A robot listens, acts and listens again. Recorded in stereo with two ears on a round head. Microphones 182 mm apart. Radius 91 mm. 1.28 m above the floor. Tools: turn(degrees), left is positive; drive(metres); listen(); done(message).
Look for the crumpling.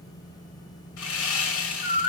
listen()
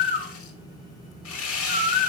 listen()
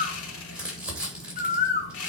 turn(degrees=-30)
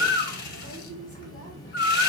turn(degrees=25)
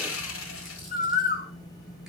listen()
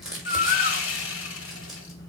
done("Facing the crumpling, 2 to 4 m away.")